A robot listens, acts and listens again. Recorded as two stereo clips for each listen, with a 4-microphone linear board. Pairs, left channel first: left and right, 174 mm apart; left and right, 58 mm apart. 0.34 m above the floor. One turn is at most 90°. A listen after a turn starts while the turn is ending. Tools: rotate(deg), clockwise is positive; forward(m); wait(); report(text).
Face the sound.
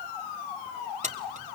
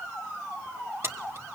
rotate(45)
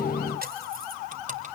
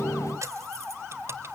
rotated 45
rotate(50)
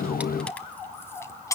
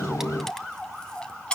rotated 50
rotate(-20)
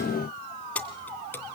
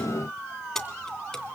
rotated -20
rotate(-10)
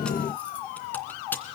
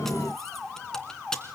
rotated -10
rotate(-10)
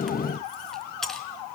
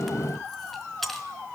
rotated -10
report("Found it: keys jangling, straight ahead, 2 to 4 m away.")